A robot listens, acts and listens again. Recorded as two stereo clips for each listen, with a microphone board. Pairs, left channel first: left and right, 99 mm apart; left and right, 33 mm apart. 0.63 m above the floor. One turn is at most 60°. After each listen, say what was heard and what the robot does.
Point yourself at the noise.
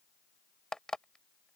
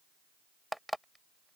Turn 30° left.
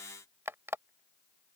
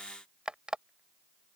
So it is at 25° right. Turn 25° right.
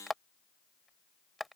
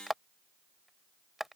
Facing the alarm clock.